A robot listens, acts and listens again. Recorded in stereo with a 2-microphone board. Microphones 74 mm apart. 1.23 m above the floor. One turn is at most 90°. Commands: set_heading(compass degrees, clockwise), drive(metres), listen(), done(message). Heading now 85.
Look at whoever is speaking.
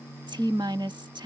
set_heading(175)
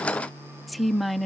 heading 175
done("Facing the woman speaking.")